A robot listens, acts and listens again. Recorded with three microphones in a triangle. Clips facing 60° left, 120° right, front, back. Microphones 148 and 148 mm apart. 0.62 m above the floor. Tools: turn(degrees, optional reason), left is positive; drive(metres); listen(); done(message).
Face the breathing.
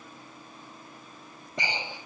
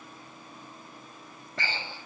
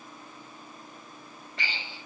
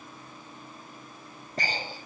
turn(degrees=135, reason="The breathing: 135° left.")
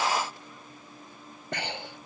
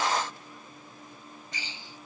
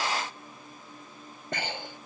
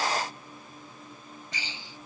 turn(degrees=35, reason="The breathing is now 35° left.")
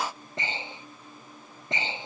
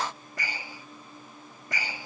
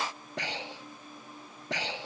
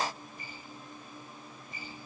done("Facing the breathing.")